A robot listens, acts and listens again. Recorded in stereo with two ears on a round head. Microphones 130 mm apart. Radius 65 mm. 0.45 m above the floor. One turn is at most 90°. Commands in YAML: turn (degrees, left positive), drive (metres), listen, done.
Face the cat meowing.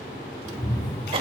turn: 20
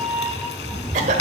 turn: -20
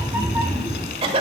turn: -20
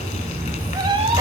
turn: -40
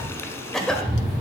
turn: -30
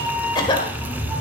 done: "Facing the cat meowing, 1 to 2 m away."